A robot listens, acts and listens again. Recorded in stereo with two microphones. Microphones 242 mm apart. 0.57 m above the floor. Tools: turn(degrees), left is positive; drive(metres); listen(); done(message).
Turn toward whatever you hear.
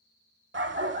turn(degrees=-50)
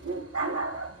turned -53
turn(degrees=-75)
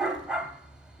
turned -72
done("Facing the dog barking.")